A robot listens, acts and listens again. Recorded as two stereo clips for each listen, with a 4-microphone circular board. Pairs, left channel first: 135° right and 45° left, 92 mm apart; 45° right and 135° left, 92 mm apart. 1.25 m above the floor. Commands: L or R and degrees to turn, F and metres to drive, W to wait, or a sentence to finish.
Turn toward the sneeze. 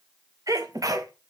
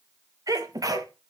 L90
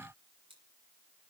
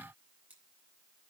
Facing where the sneeze came from. I can't hear it now.